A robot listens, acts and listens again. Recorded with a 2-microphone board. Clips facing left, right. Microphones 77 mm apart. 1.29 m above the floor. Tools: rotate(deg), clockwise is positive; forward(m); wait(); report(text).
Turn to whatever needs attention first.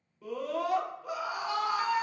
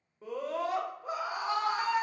rotate(30)
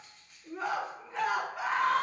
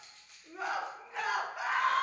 report("Facing the scream, under 1 m away.")